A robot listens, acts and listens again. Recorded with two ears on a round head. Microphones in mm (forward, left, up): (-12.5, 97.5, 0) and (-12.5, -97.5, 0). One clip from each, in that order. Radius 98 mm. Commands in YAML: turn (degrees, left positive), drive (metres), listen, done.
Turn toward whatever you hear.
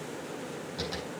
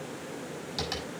turn: -65
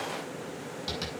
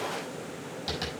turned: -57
turn: -10
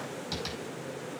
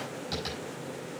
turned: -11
done: "Found it: tapping, straight ahead."